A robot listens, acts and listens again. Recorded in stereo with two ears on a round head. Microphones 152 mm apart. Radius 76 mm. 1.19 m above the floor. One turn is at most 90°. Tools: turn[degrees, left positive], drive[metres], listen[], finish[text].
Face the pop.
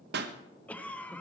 Thought: The pop: about 70° right or 110° right.
Action: turn[-70]
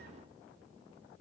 Action: listen[]
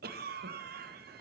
Action: finish[I heard a pop, but can't make it out now. It was about straight ahead or 40° right.]